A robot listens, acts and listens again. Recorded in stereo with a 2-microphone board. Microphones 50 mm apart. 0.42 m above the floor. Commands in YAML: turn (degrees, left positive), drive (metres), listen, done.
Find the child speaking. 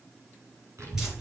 turn: -70
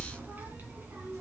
turn: -35
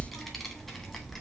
done: "Facing the child speaking, 1 to 2 m away."